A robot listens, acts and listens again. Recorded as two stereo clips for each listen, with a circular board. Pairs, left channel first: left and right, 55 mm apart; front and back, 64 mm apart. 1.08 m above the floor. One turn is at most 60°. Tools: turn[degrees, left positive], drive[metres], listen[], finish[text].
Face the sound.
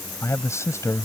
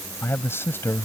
Thought: The man speaking: 55° left.
Action: turn[55]
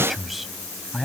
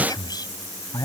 Action: finish[Facing the man speaking.]